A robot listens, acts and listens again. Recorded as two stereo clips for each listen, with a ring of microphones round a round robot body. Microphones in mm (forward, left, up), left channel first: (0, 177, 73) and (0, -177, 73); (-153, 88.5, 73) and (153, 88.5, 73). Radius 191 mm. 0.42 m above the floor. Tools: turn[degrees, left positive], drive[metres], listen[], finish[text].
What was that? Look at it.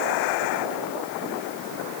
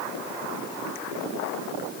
Action: listen[]
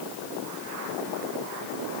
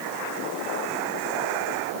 Action: listen[]
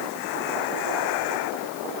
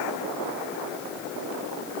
Action: finish[I can't make out anything to turn to.]